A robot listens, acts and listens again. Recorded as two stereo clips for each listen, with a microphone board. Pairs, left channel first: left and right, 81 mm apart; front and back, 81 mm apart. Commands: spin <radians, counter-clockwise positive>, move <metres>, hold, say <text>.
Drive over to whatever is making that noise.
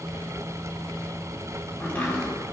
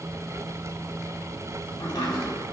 spin 0.44
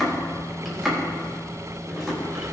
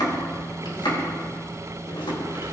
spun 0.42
move 1.0
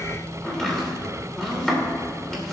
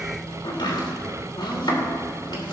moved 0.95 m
move 1.0
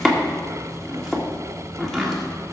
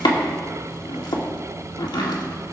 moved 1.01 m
move 1.0
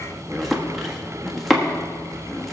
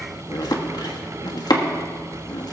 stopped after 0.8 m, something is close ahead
say I am next to the chopping.